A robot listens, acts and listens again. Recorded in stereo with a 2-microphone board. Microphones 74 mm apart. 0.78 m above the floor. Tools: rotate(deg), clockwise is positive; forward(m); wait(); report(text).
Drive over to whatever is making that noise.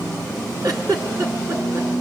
rotate(50)
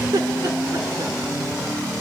rotate(75)
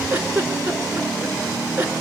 rotate(25)
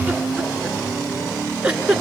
rotate(15)
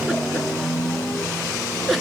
forward(1.0)
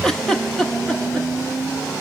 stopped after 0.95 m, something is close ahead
rotate(-10)
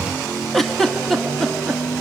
report("I am next to the giggle.")